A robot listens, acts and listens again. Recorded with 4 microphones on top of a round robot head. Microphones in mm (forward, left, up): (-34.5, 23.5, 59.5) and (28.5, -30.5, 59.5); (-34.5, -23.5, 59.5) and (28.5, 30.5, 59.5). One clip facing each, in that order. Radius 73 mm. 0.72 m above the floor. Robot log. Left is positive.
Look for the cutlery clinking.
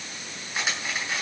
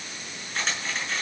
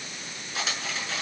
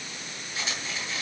note: The cutlery clinking: 140° right.
cmd yaw -140
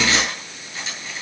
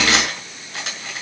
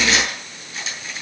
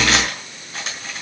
end: Facing the cutlery clinking, over 4 m away.